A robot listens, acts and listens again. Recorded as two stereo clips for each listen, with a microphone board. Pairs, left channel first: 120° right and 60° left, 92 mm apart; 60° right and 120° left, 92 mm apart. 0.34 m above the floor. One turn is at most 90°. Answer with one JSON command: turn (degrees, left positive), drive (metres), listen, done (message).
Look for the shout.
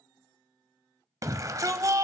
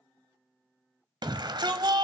{"turn": 90}
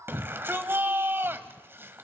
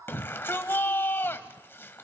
{"done": "Facing the shout, 1 to 2 m away."}